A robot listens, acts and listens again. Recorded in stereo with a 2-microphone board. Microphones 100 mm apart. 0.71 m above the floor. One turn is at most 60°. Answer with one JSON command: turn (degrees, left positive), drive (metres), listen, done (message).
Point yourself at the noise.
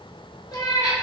{"turn": 45}
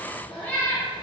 {"turn": 20}
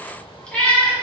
{"turn": 15}
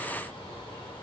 {"listen": true}
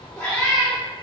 {"turn": 20}
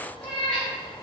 {"turn": 10}
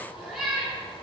{"done": "Facing the cat meowing."}